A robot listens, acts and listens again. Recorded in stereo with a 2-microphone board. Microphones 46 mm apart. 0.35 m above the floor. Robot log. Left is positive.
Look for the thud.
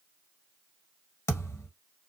note: The thud: about 75° left or 105° left.
cmd yaw +75
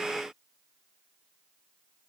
cmd idle
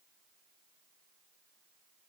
end: I heard a thud, but can't make it out now. It was about straight ahead or 30° left.